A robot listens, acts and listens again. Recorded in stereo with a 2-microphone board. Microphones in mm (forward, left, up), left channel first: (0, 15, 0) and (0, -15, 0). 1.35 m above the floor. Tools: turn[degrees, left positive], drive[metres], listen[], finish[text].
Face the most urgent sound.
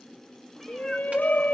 Thought: The shout: about 70° left or 110° left.
Action: turn[70]
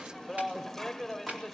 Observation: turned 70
Action: finish[Facing the shout, 1 to 2 m away.]